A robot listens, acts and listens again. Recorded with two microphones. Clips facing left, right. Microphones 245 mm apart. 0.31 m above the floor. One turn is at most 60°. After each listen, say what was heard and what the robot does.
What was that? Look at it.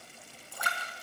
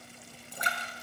The splash: about 20° right or 160° right. Turn 20° right.
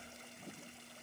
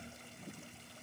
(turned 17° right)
Keep listening.
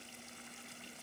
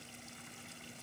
I heard a splash, but can't make it out now. It was about straight ahead or 145° right.